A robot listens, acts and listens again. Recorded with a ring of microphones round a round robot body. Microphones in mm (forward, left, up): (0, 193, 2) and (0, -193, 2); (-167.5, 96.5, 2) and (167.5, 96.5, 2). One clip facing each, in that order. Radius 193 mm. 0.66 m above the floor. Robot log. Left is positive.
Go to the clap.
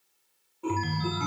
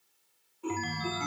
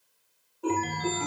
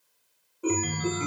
cmd idle
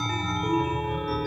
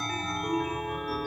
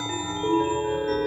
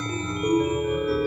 cmd idle
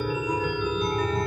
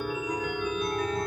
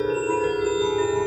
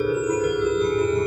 end: I can't make out a clap to turn to.